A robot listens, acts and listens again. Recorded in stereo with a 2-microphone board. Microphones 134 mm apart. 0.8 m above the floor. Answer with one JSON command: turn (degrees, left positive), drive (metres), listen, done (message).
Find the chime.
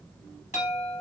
{"turn": 60}
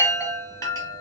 {"turn": 30}
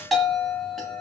{"done": "Facing the chime."}